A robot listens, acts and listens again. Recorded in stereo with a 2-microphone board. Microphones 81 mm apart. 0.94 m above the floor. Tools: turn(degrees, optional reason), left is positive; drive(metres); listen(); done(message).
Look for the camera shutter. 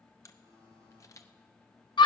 turn(degrees=40, reason="The camera shutter: about 40° left or 140° left.")
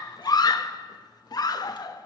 listen()
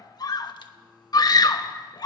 listen()
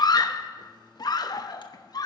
done("I heard a camera shutter, but can't make it out now. It was about straight ahead or 100° left.")